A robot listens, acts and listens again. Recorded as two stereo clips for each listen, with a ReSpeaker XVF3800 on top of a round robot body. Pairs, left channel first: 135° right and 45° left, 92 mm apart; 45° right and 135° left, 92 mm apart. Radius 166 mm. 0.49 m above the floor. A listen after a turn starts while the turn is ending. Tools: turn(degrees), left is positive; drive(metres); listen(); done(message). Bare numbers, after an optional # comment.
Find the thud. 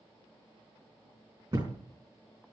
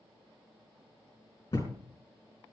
done("Facing the thud.")